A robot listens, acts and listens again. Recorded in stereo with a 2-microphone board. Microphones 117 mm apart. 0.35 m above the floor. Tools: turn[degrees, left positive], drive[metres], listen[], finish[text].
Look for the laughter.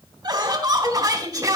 Thought: The laughter: about 30° right or 150° right.
Action: turn[-30]
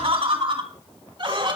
Thought: So it is at 135° right.
Action: turn[-135]
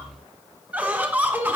Thought: The laughter is now 20° right.
Action: turn[-20]
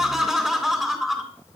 Action: finish[Facing the laughter.]